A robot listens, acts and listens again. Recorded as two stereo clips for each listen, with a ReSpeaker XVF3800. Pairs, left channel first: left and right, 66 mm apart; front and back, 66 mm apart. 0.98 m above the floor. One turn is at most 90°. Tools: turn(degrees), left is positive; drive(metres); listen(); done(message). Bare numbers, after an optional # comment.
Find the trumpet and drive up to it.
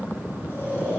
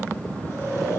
listen()
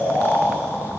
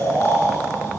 listen()
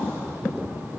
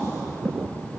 done("I can't make out a trumpet to turn to.")